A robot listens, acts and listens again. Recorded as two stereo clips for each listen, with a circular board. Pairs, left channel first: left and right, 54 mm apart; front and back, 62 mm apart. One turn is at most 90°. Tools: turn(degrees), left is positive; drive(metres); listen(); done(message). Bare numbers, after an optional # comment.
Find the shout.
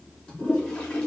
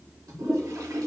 listen()
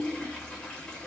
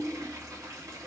listen()
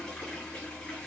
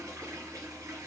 done("I can't make out a shout to turn to.")